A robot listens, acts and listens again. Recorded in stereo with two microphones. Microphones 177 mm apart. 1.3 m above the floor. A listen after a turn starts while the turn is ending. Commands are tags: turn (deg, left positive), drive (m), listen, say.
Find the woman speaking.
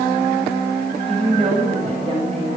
<turn deg="-35"/>
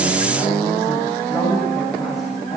<say>Facing the woman speaking, over 4 m away.</say>